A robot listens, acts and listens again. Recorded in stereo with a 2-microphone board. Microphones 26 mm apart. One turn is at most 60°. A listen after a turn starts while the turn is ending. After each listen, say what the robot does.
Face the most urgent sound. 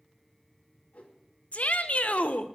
Turn 60° left.
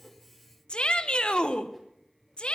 Turn 45° left.
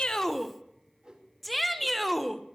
Found it: a shout, straight ahead, 1 to 2 m away.